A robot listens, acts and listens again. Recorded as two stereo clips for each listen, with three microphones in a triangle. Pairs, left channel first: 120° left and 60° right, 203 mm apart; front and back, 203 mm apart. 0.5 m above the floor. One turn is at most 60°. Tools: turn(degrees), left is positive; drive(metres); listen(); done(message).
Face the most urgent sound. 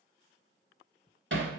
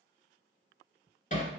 listen()
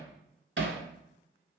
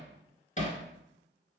listen()
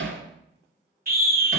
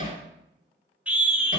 turn(degrees=-60)
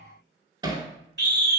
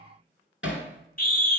turn(degrees=-40)
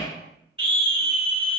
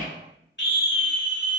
done("Found it: a scream, straight ahead, 1 to 2 m away.")